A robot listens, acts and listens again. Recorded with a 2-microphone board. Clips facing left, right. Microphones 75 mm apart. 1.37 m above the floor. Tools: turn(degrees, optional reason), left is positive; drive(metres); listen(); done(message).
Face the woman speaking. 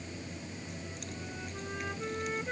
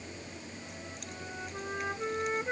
listen()
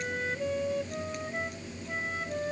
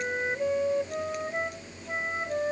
listen()
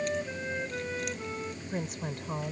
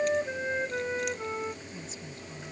turn(degrees=70, reason="The woman speaking: about 70° left or 110° left.")
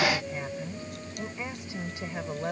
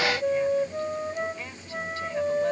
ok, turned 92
listen()
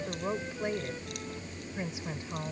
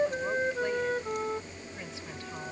turn(degrees=20, reason="So it is at 20° left.")
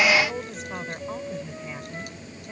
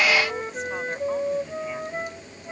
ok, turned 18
done("Found it: a woman speaking, straight ahead.")